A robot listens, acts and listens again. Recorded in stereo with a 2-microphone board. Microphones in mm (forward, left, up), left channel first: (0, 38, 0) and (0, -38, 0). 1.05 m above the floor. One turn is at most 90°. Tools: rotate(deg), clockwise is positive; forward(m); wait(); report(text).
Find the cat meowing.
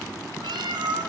rotate(70)
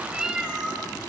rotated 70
report("Facing the cat meowing.")